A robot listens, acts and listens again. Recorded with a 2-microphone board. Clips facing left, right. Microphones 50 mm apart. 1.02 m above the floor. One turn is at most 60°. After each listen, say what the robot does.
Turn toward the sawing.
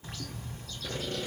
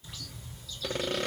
Turn 60° right.
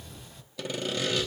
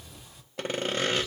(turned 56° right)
Turn 45° right.
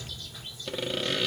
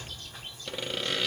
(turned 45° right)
Facing the sawing.